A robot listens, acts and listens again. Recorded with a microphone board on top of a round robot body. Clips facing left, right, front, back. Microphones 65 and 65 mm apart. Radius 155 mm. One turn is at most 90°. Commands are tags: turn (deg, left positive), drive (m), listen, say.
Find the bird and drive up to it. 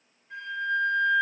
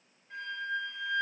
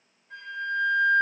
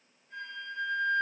<listen/>
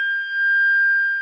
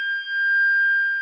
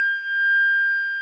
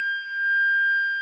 <listen/>
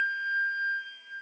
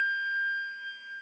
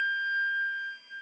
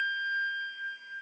<say>I can't make out a bird, only a flute.</say>